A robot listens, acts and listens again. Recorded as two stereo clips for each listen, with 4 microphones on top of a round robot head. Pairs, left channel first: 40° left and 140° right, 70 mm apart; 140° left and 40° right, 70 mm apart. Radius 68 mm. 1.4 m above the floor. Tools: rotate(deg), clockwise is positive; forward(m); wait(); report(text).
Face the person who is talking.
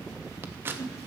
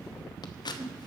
wait()
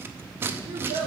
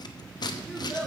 rotate(120)
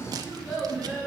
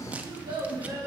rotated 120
rotate(25)
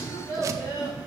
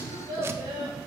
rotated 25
report("Found it: a child speaking, straight ahead.")